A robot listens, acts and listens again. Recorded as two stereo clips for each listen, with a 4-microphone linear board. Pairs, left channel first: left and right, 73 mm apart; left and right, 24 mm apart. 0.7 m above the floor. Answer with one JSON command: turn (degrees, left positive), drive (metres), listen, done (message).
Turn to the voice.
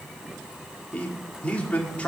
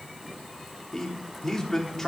{"turn": 15}
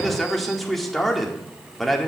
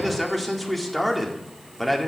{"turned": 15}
{"done": "Facing the man speaking, 1 to 2 m away."}